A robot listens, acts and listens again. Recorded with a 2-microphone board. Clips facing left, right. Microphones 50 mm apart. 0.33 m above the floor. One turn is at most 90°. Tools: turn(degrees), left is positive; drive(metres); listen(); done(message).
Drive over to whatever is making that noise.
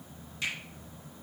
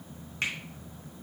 turn(degrees=-55)
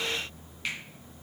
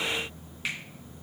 drive(metres=1.0)
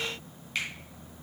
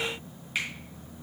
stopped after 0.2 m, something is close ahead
turn(degrees=-10)
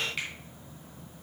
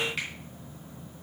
done("Blocked. The finger snap is further on, straight ahead.")